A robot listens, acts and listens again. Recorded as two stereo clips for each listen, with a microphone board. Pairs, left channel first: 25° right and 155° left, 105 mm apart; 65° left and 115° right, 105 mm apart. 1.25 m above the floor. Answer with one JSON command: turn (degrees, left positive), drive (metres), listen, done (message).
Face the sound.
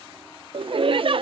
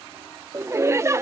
{"turn": -175}
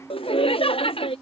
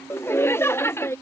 {"done": "Found it: laughter, straight ahead."}